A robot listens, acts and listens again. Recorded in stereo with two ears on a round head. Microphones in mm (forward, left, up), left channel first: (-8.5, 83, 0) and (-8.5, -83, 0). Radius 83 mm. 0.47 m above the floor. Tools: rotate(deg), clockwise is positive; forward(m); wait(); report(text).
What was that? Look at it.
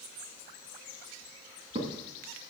rotate(35)
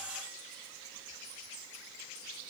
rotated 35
wait()
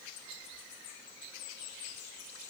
report("I heard a crack, but can't make it out now. It was about straight ahead or 110° right.")